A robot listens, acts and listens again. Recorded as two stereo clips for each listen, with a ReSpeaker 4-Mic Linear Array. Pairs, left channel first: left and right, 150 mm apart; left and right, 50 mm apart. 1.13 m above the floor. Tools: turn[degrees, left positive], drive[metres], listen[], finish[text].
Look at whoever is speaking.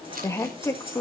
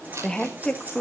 Thought: The woman speaking: about 20° left or 160° left.
Action: turn[20]
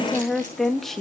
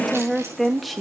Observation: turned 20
Action: finish[Found it: a woman speaking, straight ahead.]